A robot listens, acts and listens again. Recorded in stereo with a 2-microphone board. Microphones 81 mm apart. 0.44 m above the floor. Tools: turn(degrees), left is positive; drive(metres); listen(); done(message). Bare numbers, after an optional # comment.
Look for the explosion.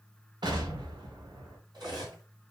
# The explosion: about 70° right or 110° right.
turn(-70)
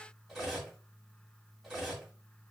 listen()
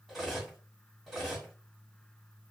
done("I heard an explosion, but can't make it out now. It was about straight ahead or 40° right.")